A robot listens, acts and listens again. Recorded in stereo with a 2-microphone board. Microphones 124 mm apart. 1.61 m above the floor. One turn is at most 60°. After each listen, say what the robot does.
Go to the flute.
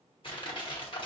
Keep listening.
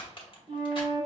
Turn 60° right.
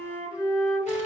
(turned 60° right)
Turn 15° right.
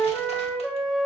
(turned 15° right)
Drive 1.0 m forward.
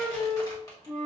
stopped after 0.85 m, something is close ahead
I am next to the flute.